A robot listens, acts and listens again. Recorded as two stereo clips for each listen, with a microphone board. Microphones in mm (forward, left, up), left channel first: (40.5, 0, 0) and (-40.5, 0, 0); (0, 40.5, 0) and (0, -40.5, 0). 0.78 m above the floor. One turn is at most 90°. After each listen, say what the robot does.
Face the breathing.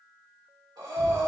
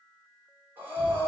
Turn 90° right.
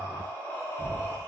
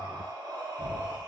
Turn 65° right.
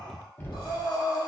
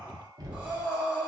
Turn 15° right.
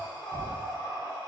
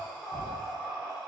Facing the breathing.